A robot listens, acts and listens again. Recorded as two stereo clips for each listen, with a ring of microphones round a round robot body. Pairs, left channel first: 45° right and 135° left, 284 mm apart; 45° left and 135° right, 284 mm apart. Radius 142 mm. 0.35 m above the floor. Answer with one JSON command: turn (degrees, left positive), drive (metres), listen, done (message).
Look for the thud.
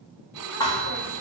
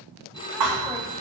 {"turn": -120}
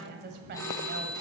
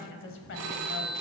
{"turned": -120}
{"done": "I heard a thud from this way, but can't make it out now."}